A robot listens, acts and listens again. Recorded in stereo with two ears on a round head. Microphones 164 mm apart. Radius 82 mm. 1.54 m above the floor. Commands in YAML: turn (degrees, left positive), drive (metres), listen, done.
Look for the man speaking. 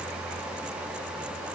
listen: true
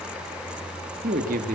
turn: -45
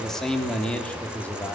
turn: 10
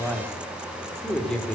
done: "Facing the man speaking, over 4 m away."